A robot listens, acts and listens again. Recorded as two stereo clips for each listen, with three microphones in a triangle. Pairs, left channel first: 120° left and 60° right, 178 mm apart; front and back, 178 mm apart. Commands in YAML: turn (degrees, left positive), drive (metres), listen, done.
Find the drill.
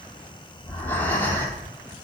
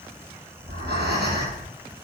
listen: true
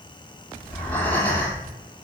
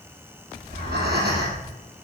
listen: true
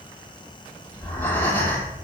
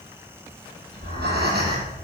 done: "I can't make out a drill to turn to."